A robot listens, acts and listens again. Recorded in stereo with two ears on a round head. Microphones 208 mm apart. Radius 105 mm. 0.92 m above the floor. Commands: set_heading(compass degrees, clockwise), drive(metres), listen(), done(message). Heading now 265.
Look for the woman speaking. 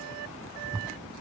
listen()
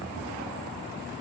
listen()
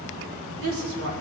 set_heading(325)
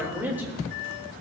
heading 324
set_heading(334)
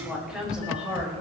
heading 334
done("Facing the woman speaking.")